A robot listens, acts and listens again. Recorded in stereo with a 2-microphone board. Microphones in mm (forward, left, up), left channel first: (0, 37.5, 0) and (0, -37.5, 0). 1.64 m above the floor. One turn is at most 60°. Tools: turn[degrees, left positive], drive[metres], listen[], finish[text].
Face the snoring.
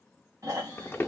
Thought: The snoring: about 50° right or 130° right.
Action: turn[-50]
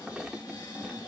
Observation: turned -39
Thought: So it is at 20° right.
Action: turn[-20]
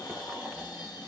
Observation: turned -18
Action: finish[Found it: snoring, straight ahead.]